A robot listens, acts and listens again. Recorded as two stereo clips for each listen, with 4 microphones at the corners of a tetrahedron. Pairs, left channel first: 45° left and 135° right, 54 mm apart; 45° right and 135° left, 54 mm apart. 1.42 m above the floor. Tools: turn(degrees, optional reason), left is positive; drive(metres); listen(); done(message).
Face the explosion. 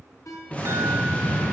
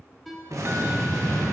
turn(degrees=110, reason="The explosion: 110° left.")
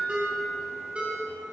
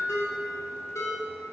done("Facing where the explosion came from. I can't hear it now.")